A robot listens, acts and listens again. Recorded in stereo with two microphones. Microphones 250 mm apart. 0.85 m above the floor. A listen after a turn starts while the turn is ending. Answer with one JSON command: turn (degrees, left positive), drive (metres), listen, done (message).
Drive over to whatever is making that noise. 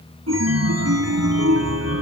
{"turn": -75}
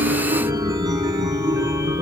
{"turn": -15}
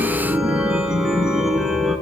{"drive": 1.0}
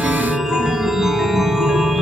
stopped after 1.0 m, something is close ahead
{"done": "I am next to the chime."}